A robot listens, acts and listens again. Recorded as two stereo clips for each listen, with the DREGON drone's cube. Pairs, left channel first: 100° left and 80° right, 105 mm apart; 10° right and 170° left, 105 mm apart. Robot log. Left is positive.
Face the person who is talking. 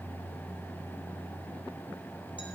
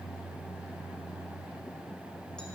cmd idle
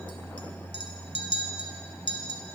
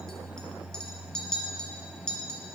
cmd idle
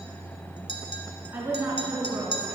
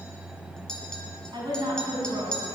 note: The woman speaking: 145° right.
cmd yaw -145
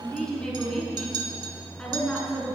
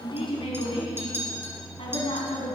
note: The woman speaking is now 20° left.
cmd yaw +20
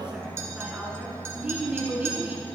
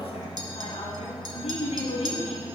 end: Found it: a woman speaking, straight ahead.